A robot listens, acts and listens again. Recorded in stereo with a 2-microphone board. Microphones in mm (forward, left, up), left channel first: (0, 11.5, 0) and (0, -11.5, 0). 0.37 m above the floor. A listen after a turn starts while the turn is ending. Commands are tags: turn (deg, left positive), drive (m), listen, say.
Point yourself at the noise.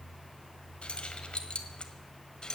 <turn deg="35"/>
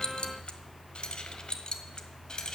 <turn deg="35"/>
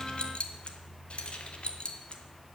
<turn deg="130"/>
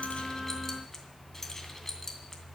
<turn deg="20"/>
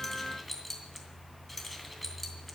<say>Facing the keys jangling.</say>